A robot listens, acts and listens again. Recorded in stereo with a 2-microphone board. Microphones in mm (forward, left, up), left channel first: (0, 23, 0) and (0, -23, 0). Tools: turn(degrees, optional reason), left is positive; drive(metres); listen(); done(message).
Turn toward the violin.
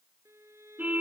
turn(degrees=-90)
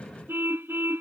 listen()
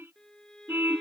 turn(degrees=10, reason="The violin is now 10° left.")
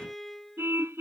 done("Found it: a violin, straight ahead.")